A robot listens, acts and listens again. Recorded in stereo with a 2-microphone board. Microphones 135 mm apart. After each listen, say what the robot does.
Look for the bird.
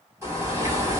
Turn 20° right.
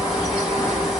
Facing the bird.